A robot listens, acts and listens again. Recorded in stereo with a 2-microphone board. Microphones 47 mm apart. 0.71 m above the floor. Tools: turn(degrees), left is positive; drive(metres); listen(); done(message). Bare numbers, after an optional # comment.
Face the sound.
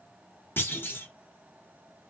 # The clunk: about 45° left or 135° left.
turn(45)
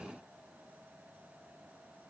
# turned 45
listen()
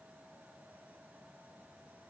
done("I heard a clunk, but can't make it out now. It was about straight ahead or 90° left.")